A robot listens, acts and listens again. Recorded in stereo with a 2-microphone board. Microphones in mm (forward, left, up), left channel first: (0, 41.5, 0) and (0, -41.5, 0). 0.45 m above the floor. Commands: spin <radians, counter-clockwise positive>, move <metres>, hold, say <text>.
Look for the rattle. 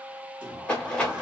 spin 0.52
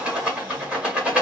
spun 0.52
spin -0.26
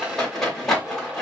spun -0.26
say Found it: a rattle, straight ahead.